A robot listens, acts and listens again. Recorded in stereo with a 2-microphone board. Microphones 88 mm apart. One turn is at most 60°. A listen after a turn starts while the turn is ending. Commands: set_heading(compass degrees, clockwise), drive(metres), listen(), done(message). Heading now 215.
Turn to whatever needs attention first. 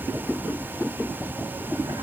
listen()
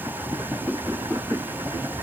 listen()
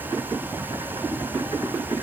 done("I can't make out anything urgent to turn to.")